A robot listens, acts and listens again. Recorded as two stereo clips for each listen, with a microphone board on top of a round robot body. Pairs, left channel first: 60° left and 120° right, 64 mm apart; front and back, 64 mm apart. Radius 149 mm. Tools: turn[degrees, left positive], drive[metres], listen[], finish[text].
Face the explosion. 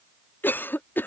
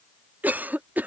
Action: listen[]
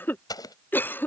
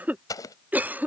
Thought: The explosion: 35° left.
Action: turn[35]
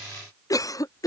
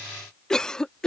Action: finish[I heard an explosion from this way, but can't make it out now.]